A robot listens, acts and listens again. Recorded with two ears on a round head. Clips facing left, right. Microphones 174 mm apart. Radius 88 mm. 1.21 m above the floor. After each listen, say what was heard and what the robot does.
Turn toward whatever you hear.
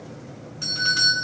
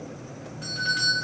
The doorbell: about 60° left or 120° left. Turn 60° left.
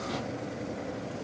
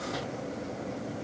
Keep listening.
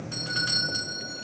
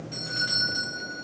So it is at 55° left. Turn 55° left.
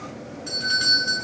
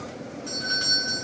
The doorbell is now 20° left. Turn 20° left.
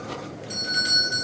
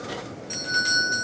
Facing the doorbell.